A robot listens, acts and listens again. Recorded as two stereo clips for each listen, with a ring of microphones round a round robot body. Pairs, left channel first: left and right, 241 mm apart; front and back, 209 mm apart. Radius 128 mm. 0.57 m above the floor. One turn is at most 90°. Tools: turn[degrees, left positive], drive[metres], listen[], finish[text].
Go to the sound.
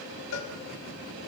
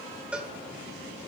Thought: The cowbell: 95° left.
Action: turn[90]
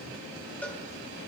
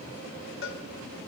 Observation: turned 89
Action: drive[1.0]
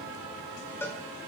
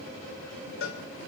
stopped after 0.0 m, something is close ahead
Thought: The cowbell is now 10° left.
Action: turn[10]
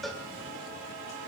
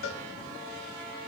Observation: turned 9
Action: finish[Something is in my way. I am facing the cowbell but have not reached it.]